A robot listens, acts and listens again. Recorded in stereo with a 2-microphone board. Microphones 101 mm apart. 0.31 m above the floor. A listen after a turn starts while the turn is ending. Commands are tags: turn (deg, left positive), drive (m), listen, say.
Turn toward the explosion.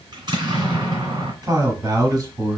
<turn deg="-45"/>
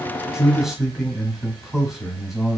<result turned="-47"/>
<listen/>
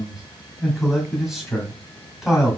<say>I heard an explosion, but can't make it out now. It was about straight ahead or 85° right.</say>